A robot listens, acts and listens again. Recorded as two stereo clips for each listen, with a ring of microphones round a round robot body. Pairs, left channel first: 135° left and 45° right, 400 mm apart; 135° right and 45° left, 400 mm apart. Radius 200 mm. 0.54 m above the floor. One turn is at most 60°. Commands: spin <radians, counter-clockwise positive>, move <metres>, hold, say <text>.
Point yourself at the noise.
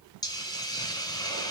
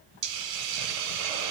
spin 0.96
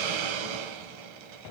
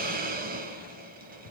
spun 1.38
spin -0.44
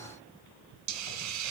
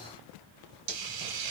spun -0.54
say Found it: a hiss, straight ahead, 1 to 2 m away.